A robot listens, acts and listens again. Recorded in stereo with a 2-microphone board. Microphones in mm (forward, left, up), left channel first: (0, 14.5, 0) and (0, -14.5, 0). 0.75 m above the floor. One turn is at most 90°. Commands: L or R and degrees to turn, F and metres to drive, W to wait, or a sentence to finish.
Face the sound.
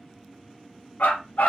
L65
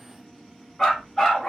L10
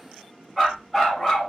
Found it: a dog barking, straight ahead, 1 to 2 m away.